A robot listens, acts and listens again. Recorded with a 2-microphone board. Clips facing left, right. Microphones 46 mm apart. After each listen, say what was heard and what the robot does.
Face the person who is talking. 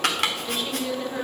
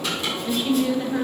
Turn 30° right.
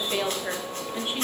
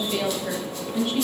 So it is at 20° left. Turn 20° left.
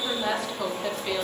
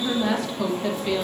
Found it: a woman speaking, straight ahead.